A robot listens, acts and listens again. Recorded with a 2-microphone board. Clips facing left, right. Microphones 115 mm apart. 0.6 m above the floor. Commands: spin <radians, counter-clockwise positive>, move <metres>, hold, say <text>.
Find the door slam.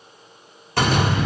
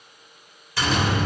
spin 0.96
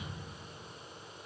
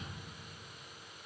hold
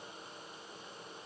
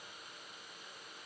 say I heard a door slam, but can't make it out now. It was about straight ahead or 70° left.